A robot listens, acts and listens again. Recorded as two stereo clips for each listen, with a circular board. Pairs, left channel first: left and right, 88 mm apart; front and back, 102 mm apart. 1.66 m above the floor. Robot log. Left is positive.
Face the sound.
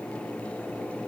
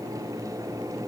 cmd idle
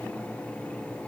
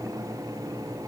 cmd idle
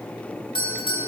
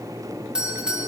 note: The doorbell: 100° left.
cmd yaw +100
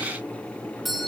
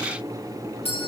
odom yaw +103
end: Found it: a doorbell, straight ahead, 2 to 4 m away.